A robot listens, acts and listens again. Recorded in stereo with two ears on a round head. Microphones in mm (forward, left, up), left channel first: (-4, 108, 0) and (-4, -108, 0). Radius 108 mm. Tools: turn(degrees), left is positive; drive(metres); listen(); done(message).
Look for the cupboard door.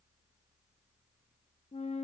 listen()
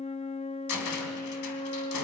turn(degrees=90)
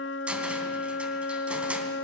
done("Found it: a cupboard door, straight ahead.")